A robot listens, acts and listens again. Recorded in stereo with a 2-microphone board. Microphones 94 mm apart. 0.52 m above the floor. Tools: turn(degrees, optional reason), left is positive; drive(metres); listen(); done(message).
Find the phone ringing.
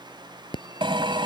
turn(degrees=55, reason="The phone ringing: about 55° left or 125° left.")
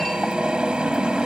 listen()
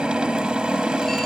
listen()
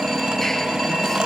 done("Facing the phone ringing.")